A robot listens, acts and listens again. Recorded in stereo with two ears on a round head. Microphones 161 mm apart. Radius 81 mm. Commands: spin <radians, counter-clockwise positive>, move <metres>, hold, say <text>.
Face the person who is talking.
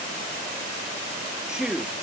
spin -0.52
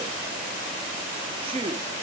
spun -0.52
spin -2.53
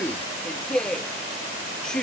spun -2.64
say Facing the man speaking.